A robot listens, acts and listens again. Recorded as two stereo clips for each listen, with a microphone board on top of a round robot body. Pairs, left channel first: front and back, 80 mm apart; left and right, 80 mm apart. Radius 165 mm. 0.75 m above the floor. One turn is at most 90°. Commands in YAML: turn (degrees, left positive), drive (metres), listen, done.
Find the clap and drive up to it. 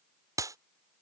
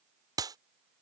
turn: -90
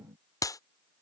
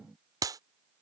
turn: -45
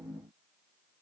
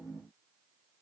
listen: true
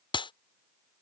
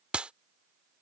turn: -15
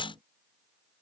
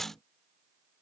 drive: 1.0
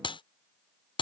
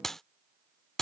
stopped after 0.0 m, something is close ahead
done: "Blocked. The clap is further on, straight ahead."